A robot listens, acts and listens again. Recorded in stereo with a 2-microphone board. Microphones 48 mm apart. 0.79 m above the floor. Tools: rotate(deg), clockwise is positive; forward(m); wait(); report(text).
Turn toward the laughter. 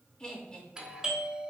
rotate(-25)
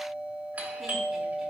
wait()
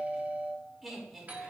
report("Facing the laughter, 2 to 4 m away.")